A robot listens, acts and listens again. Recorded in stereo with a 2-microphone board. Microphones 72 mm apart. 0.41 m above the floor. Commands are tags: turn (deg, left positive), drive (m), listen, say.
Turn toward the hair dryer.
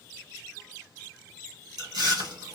<listen/>
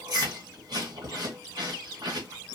<listen/>
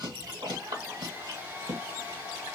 <turn deg="-25"/>
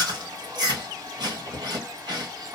<turn deg="-130"/>
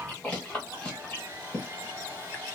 <turn deg="-30"/>
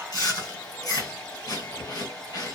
<turn deg="15"/>
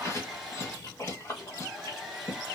<say>Found it: a hair dryer, straight ahead.</say>